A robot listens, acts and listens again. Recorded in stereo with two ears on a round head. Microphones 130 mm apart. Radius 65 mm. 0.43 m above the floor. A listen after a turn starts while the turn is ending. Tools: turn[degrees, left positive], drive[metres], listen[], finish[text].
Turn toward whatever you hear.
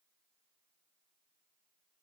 Action: listen[]
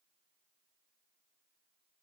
Action: listen[]
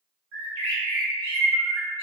Thought: The bird: about 75° right or 105° right.
Action: turn[-75]
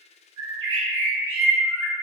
Thought: So it is at 25° right.
Action: turn[-25]
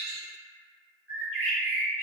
Thought: The bird is now 15° right.
Action: turn[-15]
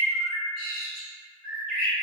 Action: finish[Facing the bird.]